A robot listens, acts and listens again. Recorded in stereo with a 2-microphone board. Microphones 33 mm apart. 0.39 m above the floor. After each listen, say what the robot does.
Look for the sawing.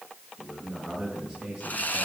Turn 50° left.
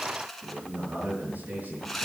Found it: sawing, straight ahead.